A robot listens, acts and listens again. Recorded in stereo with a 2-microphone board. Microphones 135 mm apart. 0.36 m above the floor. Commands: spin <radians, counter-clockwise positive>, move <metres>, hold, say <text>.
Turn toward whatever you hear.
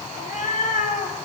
spin 1.57
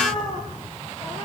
say Facing the cat meowing, over 4 m away.